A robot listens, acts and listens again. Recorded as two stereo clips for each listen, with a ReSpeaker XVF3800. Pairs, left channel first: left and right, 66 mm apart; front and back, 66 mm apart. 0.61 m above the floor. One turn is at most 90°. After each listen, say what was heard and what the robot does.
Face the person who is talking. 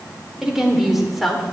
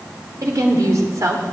The woman speaking: straight behind. Turn 90° left.
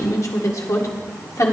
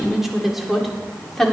The woman speaking is now 85° left. Turn 85° left.
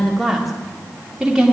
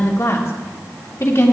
The woman speaking is now 20° right. Turn 20° right.
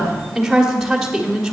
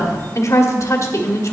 Found it: a woman speaking, straight ahead.